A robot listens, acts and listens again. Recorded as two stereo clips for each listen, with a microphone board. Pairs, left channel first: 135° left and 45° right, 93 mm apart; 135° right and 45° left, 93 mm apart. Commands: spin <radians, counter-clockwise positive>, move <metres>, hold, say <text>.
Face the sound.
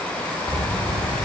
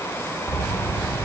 spin -1.22
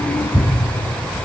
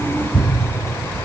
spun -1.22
spin -0.35
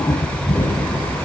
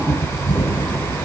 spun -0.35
spin -0.17
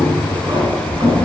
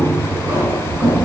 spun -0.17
say Facing the keys jangling, over 4 m away.